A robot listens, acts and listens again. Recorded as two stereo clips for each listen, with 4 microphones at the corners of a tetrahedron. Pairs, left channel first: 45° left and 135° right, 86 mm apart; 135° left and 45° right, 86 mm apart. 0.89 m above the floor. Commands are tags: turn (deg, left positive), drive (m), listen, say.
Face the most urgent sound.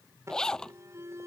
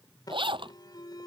<turn deg="170"/>
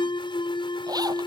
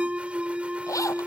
<turn deg="30"/>
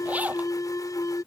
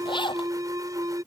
<say>Facing the alarm.</say>